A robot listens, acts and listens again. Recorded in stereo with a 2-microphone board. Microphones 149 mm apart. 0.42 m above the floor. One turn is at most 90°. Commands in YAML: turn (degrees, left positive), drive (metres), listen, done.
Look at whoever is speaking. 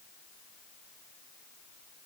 listen: true
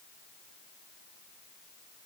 listen: true
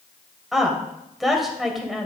turn: 30
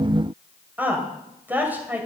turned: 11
turn: -10
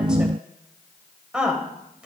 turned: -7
done: "Facing the woman speaking."